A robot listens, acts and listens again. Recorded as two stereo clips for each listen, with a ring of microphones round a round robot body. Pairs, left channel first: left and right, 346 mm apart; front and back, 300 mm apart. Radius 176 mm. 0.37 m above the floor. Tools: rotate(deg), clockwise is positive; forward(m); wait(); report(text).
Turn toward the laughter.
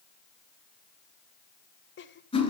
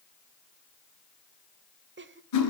rotate(-140)
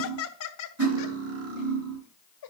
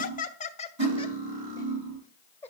rotate(-85)
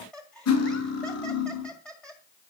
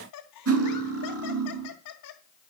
report("Found it: laughter, straight ahead, 1 to 2 m away.")